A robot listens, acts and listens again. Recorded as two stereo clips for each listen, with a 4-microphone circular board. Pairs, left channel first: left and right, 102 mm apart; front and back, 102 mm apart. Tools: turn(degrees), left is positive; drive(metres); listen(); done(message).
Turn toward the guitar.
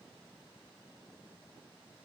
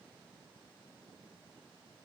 listen()
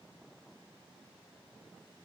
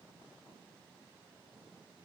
listen()
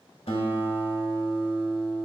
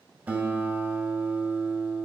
turn(degrees=105)
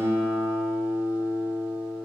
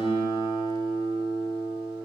turn(degrees=-25)
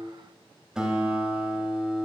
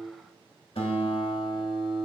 done("Found it: a guitar, straight ahead.")